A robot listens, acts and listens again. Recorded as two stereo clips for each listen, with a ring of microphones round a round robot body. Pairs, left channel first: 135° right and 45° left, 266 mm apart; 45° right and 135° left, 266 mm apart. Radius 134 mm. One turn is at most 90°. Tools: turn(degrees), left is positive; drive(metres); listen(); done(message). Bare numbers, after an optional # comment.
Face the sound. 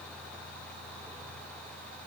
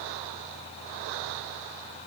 listen()
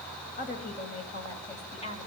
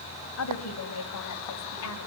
# The woman speaking: 70° right.
turn(-70)
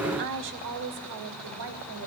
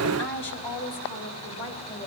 # The woman speaking is now 10° left.
turn(10)
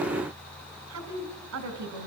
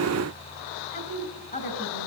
# The woman speaking is now 10° left.
turn(10)
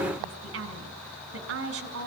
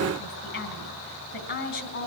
done("Facing the woman speaking, 2 to 4 m away.")